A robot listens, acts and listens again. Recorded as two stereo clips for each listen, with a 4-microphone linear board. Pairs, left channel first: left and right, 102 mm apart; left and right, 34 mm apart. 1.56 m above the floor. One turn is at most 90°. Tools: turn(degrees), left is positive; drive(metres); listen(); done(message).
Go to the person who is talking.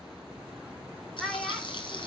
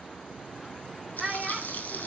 turn(degrees=30)
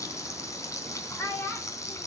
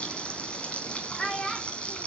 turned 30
turn(degrees=90)
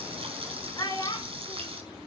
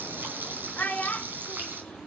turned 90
turn(degrees=40)
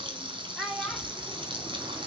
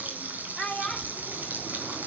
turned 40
drive(metres=1.0)
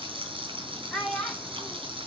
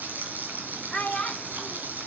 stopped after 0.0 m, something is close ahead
done("Blocked. The child speaking is further on, straight ahead.")